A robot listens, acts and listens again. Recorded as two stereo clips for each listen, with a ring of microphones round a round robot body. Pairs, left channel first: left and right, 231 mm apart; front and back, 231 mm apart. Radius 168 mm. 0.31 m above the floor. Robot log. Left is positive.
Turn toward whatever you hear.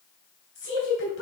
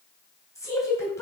note: The woman speaking: 75° left.
cmd yaw +75
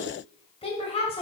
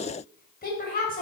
note: The woman speaking is now 35° left.
cmd yaw +35
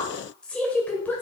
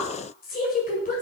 note: The woman speaking is now 15° left.
cmd yaw +15
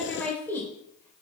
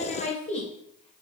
note: The woman speaking is now 20° left.
cmd yaw +20
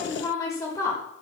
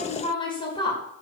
note: The woman speaking is now 35° left.
cmd yaw +35
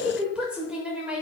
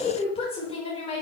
note: The woman speaking is now 10° right.
cmd yaw -10
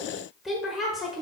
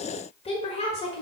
end: Found it: a woman speaking, straight ahead.